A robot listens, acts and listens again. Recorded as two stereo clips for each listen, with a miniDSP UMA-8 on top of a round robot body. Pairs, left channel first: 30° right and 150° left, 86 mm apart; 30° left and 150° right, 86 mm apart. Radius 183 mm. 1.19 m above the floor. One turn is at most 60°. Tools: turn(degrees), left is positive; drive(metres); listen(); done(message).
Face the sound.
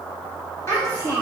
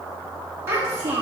turn(degrees=-60)
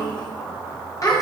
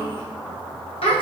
turn(degrees=25)
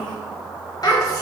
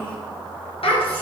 turn(degrees=25)
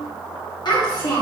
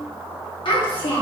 turn(degrees=10)
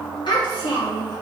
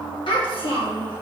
done("Facing the child speaking.")